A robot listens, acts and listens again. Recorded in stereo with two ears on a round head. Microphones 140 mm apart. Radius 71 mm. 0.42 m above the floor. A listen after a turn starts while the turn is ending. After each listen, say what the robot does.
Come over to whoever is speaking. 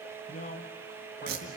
Turn 50° left.
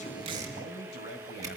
Turn 80° left.
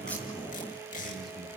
Keep listening.
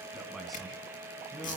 Drive 1.0 m forward.
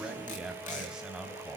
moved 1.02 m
Drive 1.0 m forward.
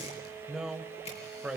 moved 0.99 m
Drive 1.0 m forward.
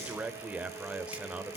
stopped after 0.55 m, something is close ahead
Turn 10° right.
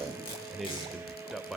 I am next to the man speaking.